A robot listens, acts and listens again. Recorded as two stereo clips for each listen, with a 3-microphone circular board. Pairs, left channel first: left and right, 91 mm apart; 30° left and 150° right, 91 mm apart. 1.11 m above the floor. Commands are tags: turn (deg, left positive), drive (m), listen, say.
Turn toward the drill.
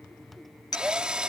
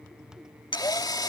<turn deg="-10"/>
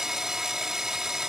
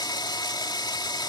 <say>Found it: a drill, straight ahead.</say>